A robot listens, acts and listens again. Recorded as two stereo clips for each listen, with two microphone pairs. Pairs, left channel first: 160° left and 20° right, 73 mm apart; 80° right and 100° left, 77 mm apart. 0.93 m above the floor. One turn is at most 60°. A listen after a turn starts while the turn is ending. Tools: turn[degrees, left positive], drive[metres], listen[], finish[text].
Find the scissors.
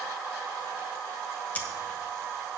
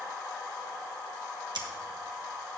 Thought: The scissors: 95° left.
Action: turn[60]
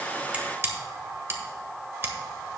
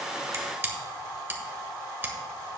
Thought: The scissors is now 35° left.
Action: turn[35]
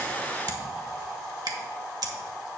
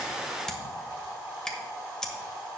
Action: finish[Found it: scissors, straight ahead.]